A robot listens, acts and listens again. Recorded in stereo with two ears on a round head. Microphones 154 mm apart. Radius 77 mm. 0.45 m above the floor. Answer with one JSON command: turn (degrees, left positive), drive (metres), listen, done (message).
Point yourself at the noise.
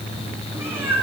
{"turn": -30}
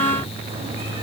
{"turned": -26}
{"listen": true}
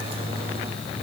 {"listen": true}
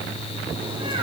{"turn": -150}
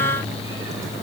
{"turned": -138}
{"turn": -10}
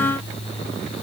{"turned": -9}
{"listen": true}
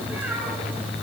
{"done": "Facing where the cat meowing came from. I can't hear it now."}